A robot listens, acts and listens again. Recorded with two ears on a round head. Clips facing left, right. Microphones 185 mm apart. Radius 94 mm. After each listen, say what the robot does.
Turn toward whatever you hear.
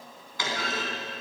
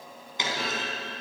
Turn 20° right.
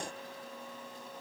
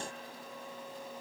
Keep listening.
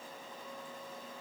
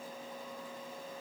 I heard a clunk, but can't make it out now. It was about straight ahead or 140° right.